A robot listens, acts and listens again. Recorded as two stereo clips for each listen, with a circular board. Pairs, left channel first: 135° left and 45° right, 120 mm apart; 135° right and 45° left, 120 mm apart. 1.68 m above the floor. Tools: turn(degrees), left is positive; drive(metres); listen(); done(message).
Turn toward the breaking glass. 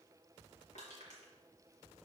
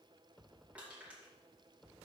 listen()
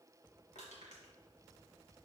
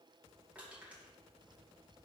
listen()
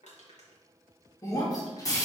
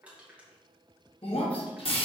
turn(degrees=-165)
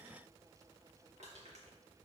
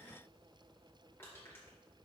done("I heard breaking glass from this way, but can't make it out now.")